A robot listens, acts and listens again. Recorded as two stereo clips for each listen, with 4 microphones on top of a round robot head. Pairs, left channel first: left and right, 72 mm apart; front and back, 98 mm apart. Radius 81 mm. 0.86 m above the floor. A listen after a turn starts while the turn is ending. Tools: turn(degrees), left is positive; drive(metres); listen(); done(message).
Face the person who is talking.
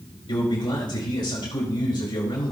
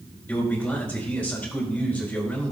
turn(degrees=75)
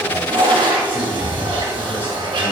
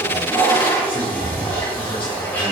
listen()
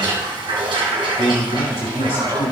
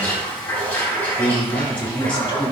turn(degrees=35)
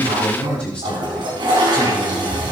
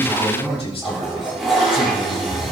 turn(degrees=20)
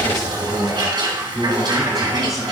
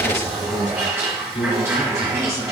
done("Found it: a man speaking, straight ahead.")